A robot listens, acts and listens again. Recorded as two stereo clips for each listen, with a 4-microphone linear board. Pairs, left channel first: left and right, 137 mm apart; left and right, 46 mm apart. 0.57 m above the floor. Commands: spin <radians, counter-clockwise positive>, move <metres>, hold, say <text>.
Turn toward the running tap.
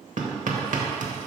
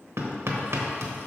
hold
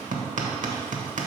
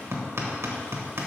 hold
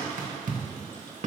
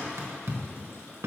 say I can't make out a running tap to turn to.